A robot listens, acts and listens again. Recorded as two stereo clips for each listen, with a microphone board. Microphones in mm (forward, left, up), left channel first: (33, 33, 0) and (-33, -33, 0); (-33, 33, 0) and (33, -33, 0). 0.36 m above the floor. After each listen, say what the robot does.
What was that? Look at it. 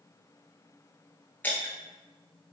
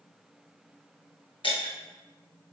Turn 115° left.
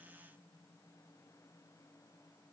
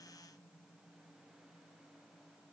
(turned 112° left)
Facing where the breaking glass came from. I can't hear it now.